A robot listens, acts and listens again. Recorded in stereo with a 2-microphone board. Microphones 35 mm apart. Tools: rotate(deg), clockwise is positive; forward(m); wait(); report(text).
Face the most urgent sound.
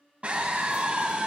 rotate(40)
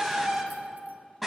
report("Found it: a scream, straight ahead, 2 to 4 m away.")